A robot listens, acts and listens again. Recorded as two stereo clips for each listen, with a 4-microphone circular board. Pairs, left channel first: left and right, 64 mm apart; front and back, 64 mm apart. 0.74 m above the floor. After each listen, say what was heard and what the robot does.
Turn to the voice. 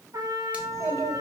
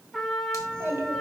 The child speaking: 125° right. Turn 125° right.
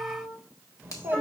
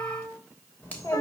The child speaking is now 40° right. Turn 40° right.
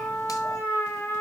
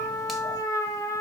Keep listening.
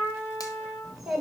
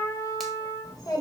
The child speaking is now 10° right. Turn 10° right.
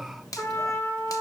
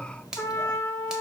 Facing the child speaking, 2 to 4 m away.